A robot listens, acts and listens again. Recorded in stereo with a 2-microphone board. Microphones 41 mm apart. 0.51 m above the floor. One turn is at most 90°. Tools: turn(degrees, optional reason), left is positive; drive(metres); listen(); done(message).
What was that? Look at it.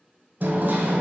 turn(degrees=-55, reason="The hammering: about 55° right or 125° right.")
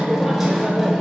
done("Facing the hammering.")